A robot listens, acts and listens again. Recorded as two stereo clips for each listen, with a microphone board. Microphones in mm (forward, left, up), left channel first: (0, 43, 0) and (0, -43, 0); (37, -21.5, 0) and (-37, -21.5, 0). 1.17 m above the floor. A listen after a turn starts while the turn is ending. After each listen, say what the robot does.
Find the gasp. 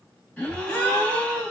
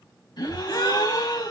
Turn 15° left.
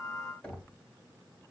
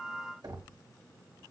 Facing where the gasp came from. I can't hear it now.